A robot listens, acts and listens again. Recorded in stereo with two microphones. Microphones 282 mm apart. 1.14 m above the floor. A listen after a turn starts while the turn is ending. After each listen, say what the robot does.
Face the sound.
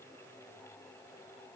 Keep listening.
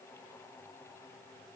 Keep listening.
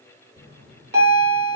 Turn 35° right.
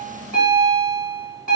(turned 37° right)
Turn 105° right.
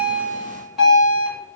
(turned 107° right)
Found it: a bell, straight ahead.